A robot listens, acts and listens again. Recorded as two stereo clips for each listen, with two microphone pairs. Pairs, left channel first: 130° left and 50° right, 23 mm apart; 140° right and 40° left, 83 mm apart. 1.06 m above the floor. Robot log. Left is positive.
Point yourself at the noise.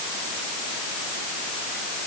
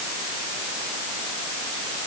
cmd idle
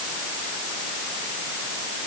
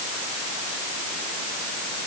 cmd idle
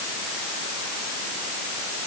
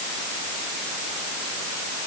end: I can't make out anything.